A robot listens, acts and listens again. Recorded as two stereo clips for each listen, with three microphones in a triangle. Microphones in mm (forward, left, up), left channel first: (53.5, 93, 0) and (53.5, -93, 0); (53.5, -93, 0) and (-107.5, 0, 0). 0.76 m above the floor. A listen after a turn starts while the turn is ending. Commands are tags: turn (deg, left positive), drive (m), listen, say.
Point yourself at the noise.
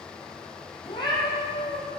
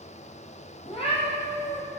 <turn deg="15"/>
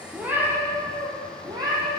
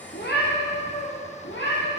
<turn deg="-25"/>
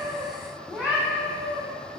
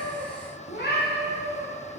<turn deg="-15"/>
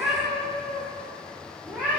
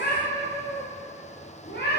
<turn deg="-10"/>
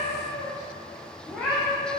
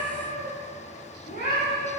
<say>Facing the cat meowing.</say>